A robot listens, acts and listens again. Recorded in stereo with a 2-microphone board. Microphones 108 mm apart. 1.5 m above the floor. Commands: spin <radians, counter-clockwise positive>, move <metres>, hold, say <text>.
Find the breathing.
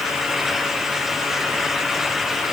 hold
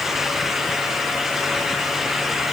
hold
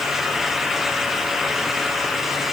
say I can't make out breathing to turn to.